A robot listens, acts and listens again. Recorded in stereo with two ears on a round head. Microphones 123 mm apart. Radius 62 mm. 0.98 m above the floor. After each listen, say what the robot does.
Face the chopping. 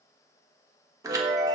Keep listening.
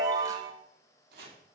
Turn 75° right.
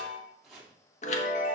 Found it: chopping, straight ahead.